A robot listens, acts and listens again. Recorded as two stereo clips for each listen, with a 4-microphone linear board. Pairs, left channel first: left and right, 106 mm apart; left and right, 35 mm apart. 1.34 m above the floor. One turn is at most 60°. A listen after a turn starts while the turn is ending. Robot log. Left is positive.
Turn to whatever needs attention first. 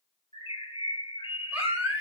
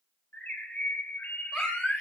cmd yaw -30
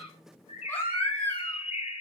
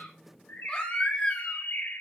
note: So it is at 20° left.
cmd yaw +20
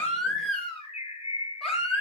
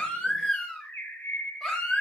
end: Found it: a baby crying, straight ahead.